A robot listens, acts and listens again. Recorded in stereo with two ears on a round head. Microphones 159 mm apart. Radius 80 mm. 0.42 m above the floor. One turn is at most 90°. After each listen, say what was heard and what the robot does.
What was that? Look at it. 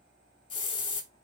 The hiss: about 30° left or 150° left. Turn 30° left.
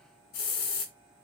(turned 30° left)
So it is at 120° left. Turn 90° left.
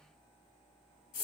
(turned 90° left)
The hiss is now 50° left. Turn 50° left.
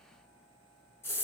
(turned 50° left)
The hiss is now 15° left. Turn 15° left.
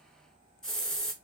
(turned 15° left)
Found it: a hiss, straight ahead.